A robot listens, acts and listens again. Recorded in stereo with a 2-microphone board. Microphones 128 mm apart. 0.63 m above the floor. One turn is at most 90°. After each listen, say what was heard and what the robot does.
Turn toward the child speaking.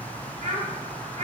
The child speaking: about 60° right or 120° right. Turn 60° right.
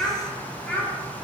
So it is at 10° left. Turn 10° left.
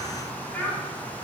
The child speaking is now 15° left. Turn 15° left.
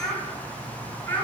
The child speaking is now 15° left. Turn 15° left.
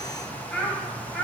Facing the child speaking, 2 to 4 m away.